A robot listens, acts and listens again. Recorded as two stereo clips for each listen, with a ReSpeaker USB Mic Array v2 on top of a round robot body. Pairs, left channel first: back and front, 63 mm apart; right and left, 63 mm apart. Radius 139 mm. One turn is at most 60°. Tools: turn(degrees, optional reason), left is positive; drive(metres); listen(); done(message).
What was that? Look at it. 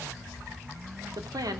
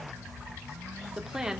turn(degrees=10, reason="The woman speaking: 10° left.")
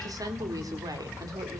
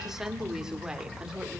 turn(degrees=15, reason="The woman speaking is now 15° left.")
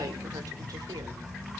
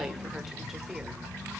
listen()
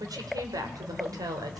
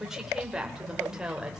turn(degrees=10, reason="The woman speaking is now 10° left.")
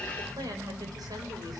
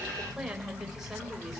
listen()
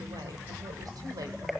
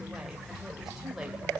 listen()
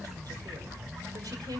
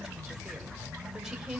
done("Found it: a woman speaking, straight ahead, 2 to 4 m away.")